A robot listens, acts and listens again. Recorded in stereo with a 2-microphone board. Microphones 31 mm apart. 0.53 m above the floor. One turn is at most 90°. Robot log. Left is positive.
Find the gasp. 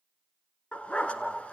cmd idle
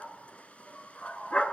cmd idle
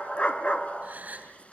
note: The gasp: about 50° right or 130° right.
cmd yaw -50
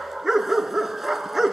cmd idle
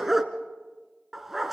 end: I heard a gasp, but can't make it out now. It was about straight ahead or 80° right.